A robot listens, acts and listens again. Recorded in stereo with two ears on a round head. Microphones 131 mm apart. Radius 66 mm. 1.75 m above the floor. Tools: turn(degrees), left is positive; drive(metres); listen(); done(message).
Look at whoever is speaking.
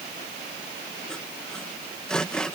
listen()
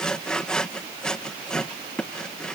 listen()
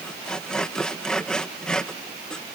done("I can't make out anyone speaking, only sawing.")